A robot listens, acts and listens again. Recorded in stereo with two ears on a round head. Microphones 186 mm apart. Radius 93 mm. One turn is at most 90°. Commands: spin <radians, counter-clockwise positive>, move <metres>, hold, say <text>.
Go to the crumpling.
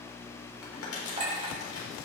spin 1.57
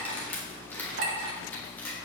spin 0.17
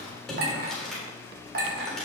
move 1.0
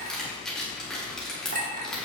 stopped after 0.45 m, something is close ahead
say Blocked. The crumpling is further on, straight ahead.